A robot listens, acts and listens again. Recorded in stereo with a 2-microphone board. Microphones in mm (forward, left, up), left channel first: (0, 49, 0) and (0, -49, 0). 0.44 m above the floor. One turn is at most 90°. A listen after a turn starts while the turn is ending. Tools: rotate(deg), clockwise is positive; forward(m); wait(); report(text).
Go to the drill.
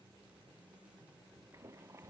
wait()
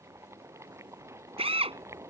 rotate(90)
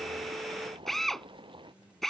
forward(1.0)
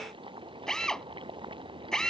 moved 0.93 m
forward(1.0)
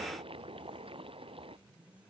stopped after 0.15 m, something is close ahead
wait()
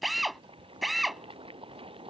report("Blocked. The drill is further on, straight ahead.")